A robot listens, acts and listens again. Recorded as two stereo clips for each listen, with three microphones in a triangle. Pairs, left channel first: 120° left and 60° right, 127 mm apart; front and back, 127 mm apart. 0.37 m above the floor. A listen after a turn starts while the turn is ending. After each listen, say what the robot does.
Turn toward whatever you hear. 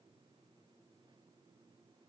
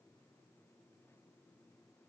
Keep listening.
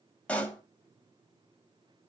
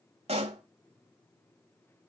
Turn 165° right.
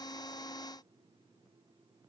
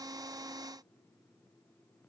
I heard a pop from this way, but can't make it out now.